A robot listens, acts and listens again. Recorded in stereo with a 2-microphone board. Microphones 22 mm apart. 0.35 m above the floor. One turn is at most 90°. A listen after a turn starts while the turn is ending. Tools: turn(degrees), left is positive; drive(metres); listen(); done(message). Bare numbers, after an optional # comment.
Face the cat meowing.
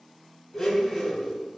listen()
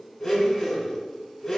listen()
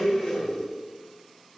done("I can't make out a cat meowing to turn to.")